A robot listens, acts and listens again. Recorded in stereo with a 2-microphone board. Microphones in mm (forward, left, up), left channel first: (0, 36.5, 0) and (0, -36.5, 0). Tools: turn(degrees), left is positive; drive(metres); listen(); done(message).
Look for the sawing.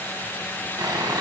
turn(degrees=-65)
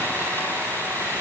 turn(degrees=-35)
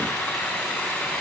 done("Found it: sawing, straight ahead, 2 to 4 m away.")